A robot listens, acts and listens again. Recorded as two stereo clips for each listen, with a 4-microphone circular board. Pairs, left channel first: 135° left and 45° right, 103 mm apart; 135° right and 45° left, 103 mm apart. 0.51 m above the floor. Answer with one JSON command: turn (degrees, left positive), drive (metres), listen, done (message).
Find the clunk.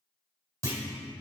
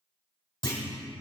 {"turn": -100}
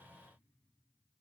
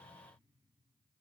{"done": "I heard a clunk from this way, but can't make it out now."}